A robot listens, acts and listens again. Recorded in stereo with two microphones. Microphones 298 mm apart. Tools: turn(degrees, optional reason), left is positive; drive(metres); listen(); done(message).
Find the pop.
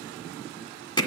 listen()
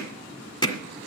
listen()
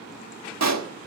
turn(degrees=-65, reason="The pop: about 65° right or 115° right.")
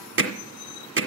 listen()
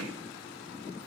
done("I heard a pop, but can't make it out now. It was about straight ahead or 50° right.")